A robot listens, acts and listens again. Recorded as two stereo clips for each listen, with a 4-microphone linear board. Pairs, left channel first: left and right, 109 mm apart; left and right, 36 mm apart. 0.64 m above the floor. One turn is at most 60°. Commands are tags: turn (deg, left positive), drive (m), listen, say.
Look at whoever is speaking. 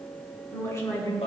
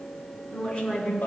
<turn deg="25"/>
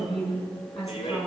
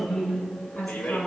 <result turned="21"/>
<say>Found it: a woman speaking, straight ahead, over 4 m away.</say>